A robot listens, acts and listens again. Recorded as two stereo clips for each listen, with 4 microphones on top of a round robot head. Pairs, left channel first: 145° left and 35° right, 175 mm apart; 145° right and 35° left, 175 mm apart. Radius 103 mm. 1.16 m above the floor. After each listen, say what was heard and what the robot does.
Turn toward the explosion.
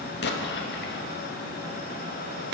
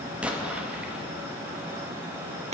The explosion: 120° left. Turn 120° left.
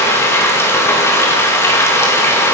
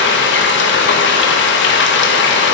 I heard an explosion from this way, but can't make it out now.